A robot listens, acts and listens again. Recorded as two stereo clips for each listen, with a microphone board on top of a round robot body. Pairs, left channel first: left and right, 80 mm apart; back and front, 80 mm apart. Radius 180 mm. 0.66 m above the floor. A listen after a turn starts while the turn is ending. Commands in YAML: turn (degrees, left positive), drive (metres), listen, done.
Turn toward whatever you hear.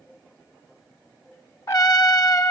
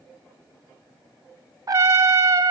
turn: 45
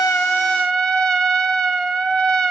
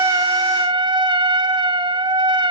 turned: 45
done: "Found it: a trumpet, straight ahead."